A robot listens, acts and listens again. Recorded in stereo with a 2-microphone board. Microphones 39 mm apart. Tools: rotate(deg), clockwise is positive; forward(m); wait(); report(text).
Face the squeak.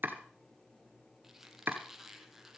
rotate(30)
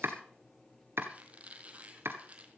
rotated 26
rotate(145)
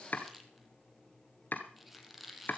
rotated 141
report("Found it: a squeak, straight ahead.")